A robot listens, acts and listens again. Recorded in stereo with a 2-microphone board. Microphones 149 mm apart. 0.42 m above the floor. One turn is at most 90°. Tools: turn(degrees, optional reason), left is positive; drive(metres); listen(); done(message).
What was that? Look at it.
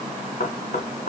turn(degrees=90)
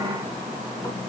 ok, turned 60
turn(degrees=30, reason="Nothing new. It was at 30° left.")
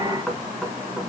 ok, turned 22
done("Facing the knocking, 2 to 4 m away.")